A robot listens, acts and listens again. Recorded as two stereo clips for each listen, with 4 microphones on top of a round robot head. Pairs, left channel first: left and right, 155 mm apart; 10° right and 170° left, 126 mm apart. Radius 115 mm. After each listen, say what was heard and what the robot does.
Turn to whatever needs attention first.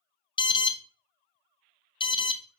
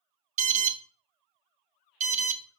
The alarm: 150° left. Turn 150° left.
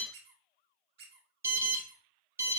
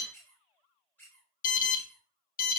The alarm is now 15° right. Turn 15° right.
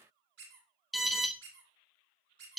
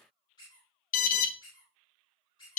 Found it: an alarm, straight ahead.